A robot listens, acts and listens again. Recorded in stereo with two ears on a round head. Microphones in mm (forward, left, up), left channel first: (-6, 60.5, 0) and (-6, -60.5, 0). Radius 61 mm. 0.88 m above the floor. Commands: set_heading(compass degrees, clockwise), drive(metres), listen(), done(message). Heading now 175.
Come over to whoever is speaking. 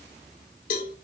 listen()
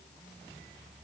listen()
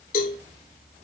done("I can't make out anyone speaking, only a cowbell.")